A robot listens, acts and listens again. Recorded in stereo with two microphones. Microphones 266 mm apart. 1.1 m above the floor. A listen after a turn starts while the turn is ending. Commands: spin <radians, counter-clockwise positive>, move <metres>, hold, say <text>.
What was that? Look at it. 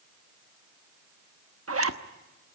spin -0.96
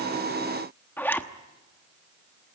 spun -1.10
say Facing the zipper.